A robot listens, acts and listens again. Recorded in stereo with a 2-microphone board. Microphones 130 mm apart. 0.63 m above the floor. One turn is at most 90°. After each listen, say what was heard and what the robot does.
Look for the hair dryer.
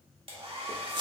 The hair dryer: about 45° right or 135° right. Turn 45° right.
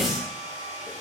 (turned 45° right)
So it is at 80° right. Turn 80° right.
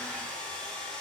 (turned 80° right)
The hair dryer is now 10° left. Turn 10° left.
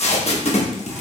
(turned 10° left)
Keep listening.
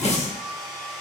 Found it: a hair dryer, straight ahead, 1 to 2 m away.